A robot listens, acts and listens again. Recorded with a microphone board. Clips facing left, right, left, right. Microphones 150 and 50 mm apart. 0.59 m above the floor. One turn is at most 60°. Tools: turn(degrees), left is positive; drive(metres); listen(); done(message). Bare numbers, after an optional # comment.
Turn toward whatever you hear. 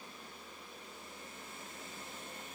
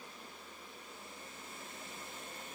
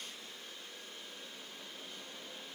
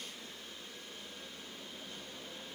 listen()
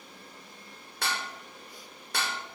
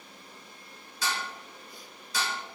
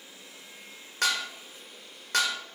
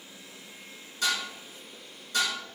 # The dishes clattering: about 65° left or 115° left.
turn(60)
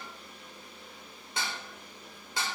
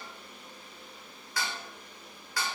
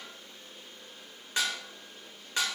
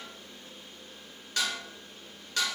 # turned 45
# So it is at 25° left.
turn(25)
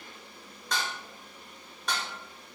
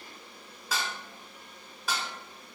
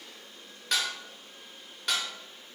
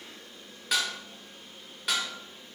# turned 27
done("Facing the dishes clattering.")